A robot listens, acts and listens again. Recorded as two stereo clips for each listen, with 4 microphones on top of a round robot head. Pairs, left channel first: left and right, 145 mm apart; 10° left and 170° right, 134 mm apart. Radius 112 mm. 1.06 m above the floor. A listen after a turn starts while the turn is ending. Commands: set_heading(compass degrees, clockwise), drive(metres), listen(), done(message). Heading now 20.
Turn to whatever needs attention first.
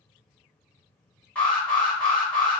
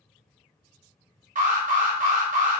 set_heading(210)
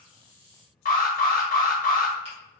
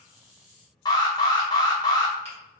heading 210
set_heading(145)
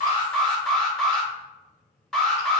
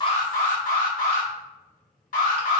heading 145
done("Facing the alarm.")